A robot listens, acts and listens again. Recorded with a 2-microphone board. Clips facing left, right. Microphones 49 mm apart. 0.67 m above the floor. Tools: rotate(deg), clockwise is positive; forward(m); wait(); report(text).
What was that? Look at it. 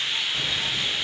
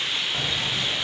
rotate(45)
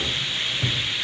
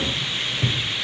rotate(10)
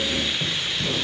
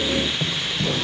rotate(20)
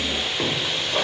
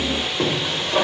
rotate(15)
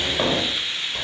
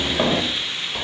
rotate(15)
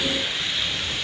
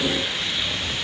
rotate(10)
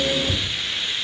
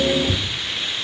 report("Facing the keys jangling, 1 to 2 m away.")